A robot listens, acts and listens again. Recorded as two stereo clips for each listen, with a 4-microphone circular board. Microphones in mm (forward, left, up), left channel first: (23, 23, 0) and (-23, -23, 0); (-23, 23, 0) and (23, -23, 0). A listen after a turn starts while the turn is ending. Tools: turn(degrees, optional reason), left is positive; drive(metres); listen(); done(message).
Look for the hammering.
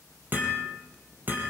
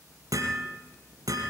turn(degrees=-75, reason="The hammering: 75° right.")
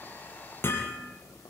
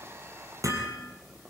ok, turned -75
turn(degrees=-10, reason="The hammering is now 10° right.")
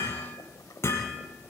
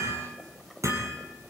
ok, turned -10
done("Facing the hammering, over 4 m away.")